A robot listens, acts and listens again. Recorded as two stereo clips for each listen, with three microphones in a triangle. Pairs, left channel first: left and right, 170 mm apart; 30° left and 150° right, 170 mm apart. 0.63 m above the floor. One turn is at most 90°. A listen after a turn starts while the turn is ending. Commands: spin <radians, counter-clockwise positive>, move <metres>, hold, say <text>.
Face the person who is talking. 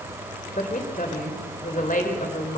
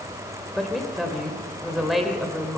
spin 1.57
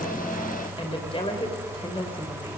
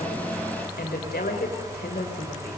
spin 0.61
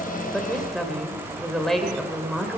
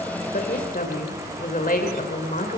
say Found it: a woman speaking, straight ahead, 2 to 4 m away.